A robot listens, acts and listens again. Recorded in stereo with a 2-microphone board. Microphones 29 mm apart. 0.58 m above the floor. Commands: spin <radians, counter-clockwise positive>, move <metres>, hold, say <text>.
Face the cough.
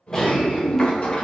spin 0.35
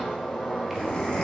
spin 2.44
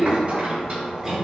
spin -0.44
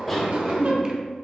say Facing the cough.